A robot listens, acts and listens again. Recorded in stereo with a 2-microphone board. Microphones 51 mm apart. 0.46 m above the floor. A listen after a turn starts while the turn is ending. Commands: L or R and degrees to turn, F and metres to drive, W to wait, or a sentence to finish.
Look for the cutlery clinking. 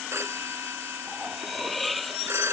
L30
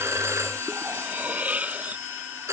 R30
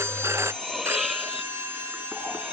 Found it: cutlery clinking, straight ahead.